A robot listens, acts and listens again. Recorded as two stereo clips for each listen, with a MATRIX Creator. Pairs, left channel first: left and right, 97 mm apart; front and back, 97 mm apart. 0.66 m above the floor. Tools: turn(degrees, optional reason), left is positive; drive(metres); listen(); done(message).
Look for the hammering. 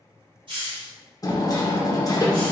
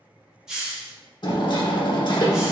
turn(degrees=40, reason="The hammering: 40° left.")
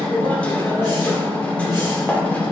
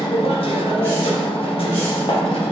turn(degrees=15, reason="The hammering is now 15° left.")
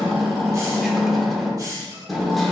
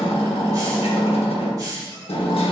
done("Found it: hammering, straight ahead, under 1 m away.")